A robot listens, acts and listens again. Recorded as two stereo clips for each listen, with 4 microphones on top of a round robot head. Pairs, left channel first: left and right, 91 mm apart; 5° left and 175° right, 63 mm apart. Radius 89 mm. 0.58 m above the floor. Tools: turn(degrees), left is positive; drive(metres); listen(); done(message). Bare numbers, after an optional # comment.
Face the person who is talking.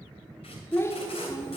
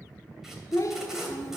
# The child speaking: 30° left.
turn(30)
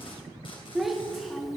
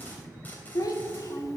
done("Found it: a child speaking, straight ahead, 1 to 2 m away.")